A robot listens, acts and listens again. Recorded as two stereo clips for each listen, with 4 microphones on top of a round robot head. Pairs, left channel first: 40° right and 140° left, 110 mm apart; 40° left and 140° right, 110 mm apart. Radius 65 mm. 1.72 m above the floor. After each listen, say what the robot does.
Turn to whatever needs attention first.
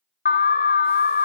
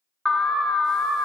Turn 50° right.
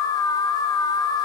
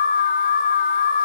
Turn 20° left.
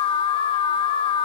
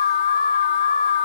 Found it: an alarm, straight ahead.